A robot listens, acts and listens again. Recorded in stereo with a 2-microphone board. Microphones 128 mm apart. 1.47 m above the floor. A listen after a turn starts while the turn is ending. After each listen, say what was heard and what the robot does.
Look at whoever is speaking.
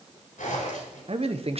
The man speaking: about 50° right or 130° right. Turn 50° right.
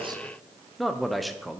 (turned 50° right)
Found it: a man speaking, straight ahead.